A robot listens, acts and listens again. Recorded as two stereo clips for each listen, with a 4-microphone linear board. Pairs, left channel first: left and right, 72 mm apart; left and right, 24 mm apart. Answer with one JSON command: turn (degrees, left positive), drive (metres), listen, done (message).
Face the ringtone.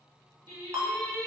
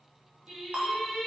{"turn": -55}
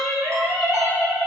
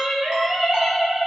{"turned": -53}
{"listen": true}
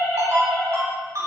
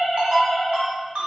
{"turn": -60}
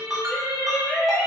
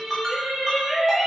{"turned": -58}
{"done": "Facing the ringtone."}